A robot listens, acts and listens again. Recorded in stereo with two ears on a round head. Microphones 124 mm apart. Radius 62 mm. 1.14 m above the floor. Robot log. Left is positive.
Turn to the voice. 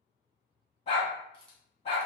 cmd idle
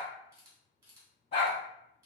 cmd idle
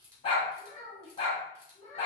note: The child speaking: about 45° left or 135° left.
cmd yaw +45
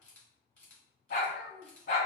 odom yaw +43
end: Found it: a child speaking, straight ahead, 1 to 2 m away.